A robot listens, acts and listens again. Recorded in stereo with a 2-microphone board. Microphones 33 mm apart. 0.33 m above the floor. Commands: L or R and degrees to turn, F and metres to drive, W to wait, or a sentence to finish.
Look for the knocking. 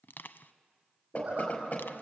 L45
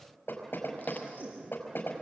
L90
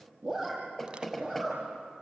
Facing the knocking, over 4 m away.